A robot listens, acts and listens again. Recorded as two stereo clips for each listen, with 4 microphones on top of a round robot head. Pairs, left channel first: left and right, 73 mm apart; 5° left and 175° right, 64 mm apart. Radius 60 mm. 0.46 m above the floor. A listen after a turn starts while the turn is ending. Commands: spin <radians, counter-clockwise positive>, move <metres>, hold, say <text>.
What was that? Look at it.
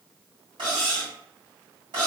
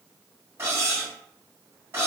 spin -1.92
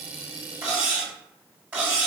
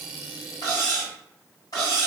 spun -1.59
spin -0.35
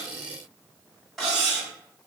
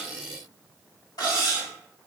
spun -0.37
say Facing the cutlery clinking.